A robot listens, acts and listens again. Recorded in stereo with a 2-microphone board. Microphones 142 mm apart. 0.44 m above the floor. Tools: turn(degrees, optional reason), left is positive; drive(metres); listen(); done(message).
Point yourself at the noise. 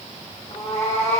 turn(degrees=50, reason="The cat meowing: about 50° left or 130° left.")
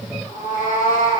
turn(degrees=80, reason="So it is at 80° left.")
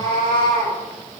turn(degrees=35, reason="The cat meowing is now 35° left.")
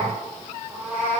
turn(degrees=-15, reason="The cat meowing is now 15° right.")
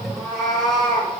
done("Found it: a cat meowing, straight ahead, over 4 m away.")